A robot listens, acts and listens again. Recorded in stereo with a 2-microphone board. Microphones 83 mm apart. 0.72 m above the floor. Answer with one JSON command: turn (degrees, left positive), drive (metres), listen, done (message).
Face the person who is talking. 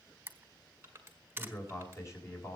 {"turn": 35}
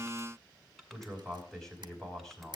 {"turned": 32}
{"done": "Found it: a man speaking, straight ahead."}